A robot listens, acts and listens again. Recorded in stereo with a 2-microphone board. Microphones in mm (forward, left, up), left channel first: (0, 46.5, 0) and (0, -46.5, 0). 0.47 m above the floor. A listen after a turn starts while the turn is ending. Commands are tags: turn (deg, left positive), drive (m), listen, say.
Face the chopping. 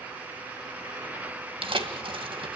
<listen/>
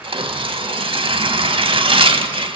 <listen/>
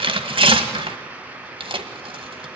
<say>I can't make out chopping, only tearing paper.</say>